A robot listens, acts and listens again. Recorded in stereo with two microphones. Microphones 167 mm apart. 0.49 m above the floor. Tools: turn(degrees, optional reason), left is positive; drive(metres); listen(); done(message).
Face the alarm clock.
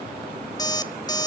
turn(degrees=25, reason="The alarm clock: about 25° left or 155° left.")
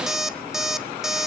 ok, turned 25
done("Facing the alarm clock.")